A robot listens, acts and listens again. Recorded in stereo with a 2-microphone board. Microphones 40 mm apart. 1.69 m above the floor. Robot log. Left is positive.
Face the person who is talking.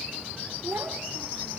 cmd yaw -90
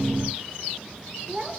note: So it is at 10° right.
cmd yaw -10
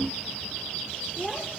end: Facing the child speaking, over 4 m away.